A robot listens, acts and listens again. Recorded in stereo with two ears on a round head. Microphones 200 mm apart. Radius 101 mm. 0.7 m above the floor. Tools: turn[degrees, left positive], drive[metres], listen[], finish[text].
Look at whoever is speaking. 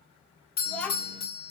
Action: turn[30]
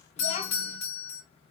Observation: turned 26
Action: listen[]
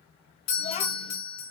Thought: So it is at 145° left.
Action: turn[145]
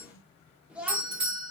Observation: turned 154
Action: finish[Found it: a child speaking, straight ahead, under 1 m away.]